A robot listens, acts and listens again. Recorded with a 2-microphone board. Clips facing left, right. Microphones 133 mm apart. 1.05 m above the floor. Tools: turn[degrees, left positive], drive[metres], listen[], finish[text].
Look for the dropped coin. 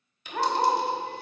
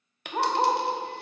Thought: The dropped coin: about 65° right or 115° right.
Action: turn[-65]
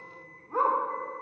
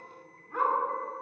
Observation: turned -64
Action: listen[]
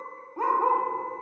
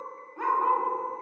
Action: finish[I heard a dropped coin, but can't make it out now. It was about straight ahead or 50° right.]